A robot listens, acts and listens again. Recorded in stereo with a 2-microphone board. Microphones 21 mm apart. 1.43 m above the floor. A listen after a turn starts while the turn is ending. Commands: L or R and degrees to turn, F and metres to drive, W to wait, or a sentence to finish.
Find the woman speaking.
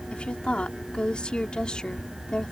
L45
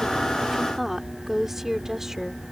R20
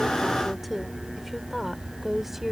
R10
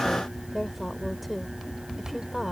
Found it: a woman speaking, straight ahead.